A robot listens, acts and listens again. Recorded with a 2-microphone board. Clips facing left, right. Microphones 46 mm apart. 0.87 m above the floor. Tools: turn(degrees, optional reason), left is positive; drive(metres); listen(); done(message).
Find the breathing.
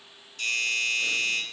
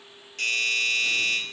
listen()
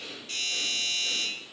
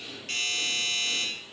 turn(degrees=65, reason="The breathing: about 65° left or 115° left.")
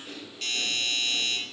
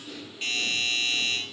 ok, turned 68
turn(degrees=45, reason="So it is at 45° left.")
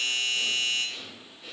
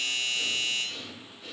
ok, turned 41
done("Facing the breathing, 2 to 4 m away.")